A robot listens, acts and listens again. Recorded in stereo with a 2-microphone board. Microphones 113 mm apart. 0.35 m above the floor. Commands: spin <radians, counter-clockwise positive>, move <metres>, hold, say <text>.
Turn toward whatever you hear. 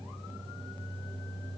hold
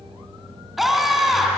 spin 0.52
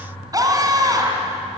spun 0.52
spin -0.61
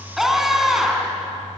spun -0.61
say Found it: a scream, straight ahead, 2 to 4 m away.